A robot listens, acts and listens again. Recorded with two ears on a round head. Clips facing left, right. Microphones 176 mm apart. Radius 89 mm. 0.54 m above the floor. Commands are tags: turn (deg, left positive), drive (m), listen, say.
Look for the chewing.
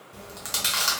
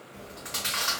<turn deg="65"/>
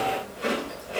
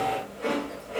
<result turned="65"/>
<turn deg="50"/>
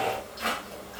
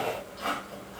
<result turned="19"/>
<turn deg="35"/>
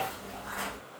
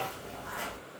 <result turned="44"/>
<turn deg="-10"/>
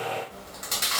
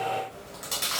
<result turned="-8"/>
<say>Found it: chewing, straight ahead.</say>